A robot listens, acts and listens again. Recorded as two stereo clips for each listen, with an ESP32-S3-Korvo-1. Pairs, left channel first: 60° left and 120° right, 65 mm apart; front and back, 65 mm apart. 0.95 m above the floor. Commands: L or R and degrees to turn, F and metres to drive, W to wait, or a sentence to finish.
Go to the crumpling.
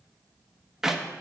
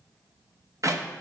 W
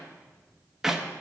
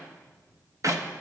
W
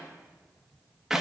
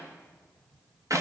I can't make out crumpling to turn to.